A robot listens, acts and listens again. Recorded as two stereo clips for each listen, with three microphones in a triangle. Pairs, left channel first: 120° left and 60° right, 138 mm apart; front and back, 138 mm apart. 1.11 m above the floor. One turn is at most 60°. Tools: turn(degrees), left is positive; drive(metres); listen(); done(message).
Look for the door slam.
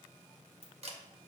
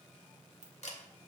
listen()
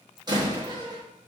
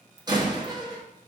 turn(degrees=-60)
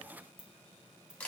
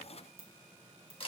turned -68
turn(degrees=-50)
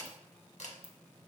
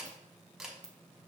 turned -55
done("Facing where the door slam came from. I can't hear it now.")